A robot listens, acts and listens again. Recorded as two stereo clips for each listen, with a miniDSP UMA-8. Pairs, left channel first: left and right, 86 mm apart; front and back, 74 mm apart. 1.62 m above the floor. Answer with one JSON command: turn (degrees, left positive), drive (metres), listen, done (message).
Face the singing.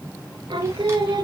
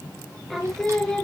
{"turn": -80}
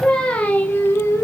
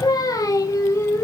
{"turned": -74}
{"turn": 40}
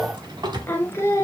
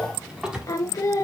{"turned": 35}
{"turn": 40}
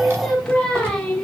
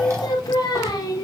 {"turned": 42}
{"turn": 15}
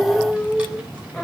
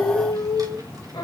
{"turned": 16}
{"done": "Facing the singing."}